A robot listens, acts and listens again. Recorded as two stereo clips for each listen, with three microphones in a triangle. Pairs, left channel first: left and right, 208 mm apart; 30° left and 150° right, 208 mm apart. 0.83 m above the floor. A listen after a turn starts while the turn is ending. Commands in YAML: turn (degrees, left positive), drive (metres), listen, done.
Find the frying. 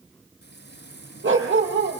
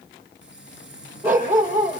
turn: 55
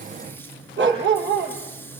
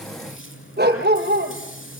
turn: 10
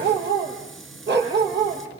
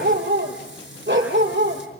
done: "Found it: frying, straight ahead."